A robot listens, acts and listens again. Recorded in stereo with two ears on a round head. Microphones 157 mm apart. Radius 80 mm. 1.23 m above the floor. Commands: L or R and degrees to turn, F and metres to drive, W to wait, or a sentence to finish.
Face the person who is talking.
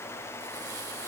W
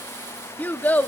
L30
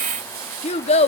L140
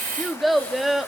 Facing the child speaking, 1 to 2 m away.